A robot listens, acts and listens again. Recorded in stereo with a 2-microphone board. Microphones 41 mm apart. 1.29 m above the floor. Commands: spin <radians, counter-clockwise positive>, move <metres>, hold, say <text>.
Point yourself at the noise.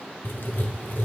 spin 1.05
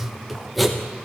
say Found it: writing, straight ahead, 1 to 2 m away.